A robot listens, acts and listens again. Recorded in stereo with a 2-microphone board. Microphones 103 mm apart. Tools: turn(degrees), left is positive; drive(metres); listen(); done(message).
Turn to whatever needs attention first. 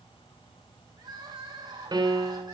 turn(degrees=-40)
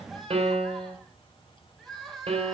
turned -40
done("Facing the crying, 2 to 4 m away.")